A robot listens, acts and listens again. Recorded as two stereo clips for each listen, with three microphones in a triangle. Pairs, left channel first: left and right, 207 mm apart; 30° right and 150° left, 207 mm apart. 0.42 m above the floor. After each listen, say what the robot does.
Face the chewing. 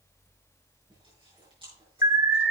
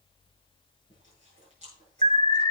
Turn 155° right.
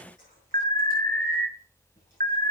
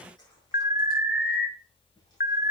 Keep listening.
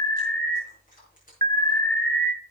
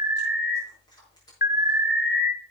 Turn 40° left.
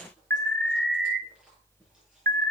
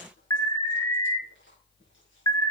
Keep listening.
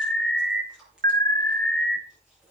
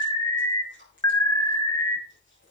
Found it: chewing, straight ahead.